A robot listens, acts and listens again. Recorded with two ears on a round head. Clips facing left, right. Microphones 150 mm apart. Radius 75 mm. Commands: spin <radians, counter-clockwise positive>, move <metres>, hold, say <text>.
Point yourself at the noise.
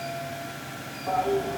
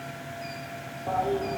spin -0.52
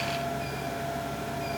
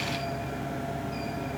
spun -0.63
spin -2.44
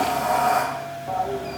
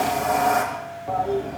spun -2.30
say Facing the toilet flushing.